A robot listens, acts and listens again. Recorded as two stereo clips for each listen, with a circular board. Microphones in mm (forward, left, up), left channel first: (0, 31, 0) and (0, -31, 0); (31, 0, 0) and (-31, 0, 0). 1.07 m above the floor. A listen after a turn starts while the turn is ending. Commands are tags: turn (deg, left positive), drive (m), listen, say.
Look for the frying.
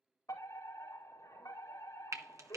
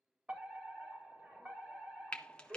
<turn deg="-70"/>
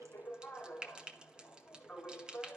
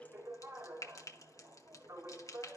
<turn deg="-15"/>
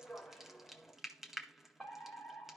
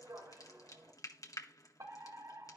<say>Facing the frying.</say>